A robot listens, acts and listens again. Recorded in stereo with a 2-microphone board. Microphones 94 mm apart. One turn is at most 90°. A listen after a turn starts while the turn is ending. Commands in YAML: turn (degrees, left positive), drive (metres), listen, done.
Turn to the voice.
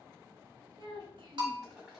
turn: -60
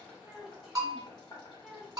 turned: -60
done: "Found it: a child speaking, straight ahead."